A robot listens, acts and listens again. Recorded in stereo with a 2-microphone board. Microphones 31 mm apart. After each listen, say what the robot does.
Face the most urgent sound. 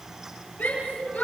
Turn 70° left.
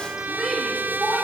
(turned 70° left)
Found it: a shout, straight ahead, over 4 m away.